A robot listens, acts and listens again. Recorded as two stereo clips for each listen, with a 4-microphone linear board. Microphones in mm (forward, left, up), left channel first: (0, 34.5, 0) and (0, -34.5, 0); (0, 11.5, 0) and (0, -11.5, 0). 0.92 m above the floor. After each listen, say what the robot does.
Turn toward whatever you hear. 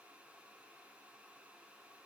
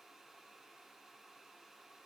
Keep listening.
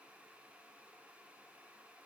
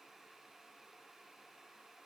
Keep listening.
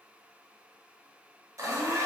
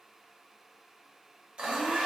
Turn 45° right.
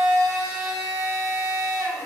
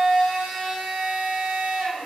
Turn 80° right.
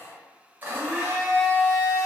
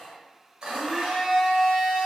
Turn 30° right.
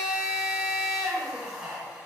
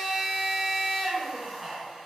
Turn 10° right.
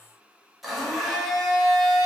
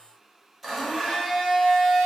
Facing the blender, under 1 m away.